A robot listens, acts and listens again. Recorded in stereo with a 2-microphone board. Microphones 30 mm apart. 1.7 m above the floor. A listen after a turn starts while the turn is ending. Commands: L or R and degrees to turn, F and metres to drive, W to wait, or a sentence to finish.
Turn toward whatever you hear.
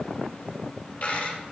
L60
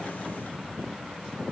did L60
W
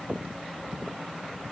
I heard a dropped coin, but can't make it out now. It was about straight ahead or 60° left.